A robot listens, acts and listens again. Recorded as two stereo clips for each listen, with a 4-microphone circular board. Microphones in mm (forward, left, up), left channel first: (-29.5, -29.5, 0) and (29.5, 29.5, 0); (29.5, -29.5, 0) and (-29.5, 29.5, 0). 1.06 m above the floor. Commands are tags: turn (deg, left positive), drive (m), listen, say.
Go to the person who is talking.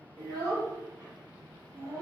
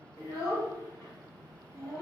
<drive m="1.0"/>
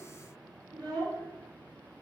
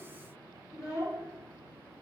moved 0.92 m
<turn deg="10"/>
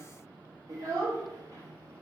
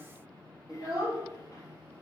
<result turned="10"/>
<drive m="1.0"/>
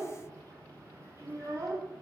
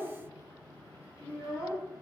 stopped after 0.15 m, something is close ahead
<say>Arrived at the child speaking, straight ahead.</say>